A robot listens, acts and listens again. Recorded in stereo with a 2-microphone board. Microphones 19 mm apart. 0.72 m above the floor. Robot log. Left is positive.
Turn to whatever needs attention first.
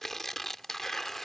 cmd idle
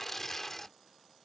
cmd idle
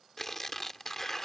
end: I can't make out anything urgent, only tearing paper.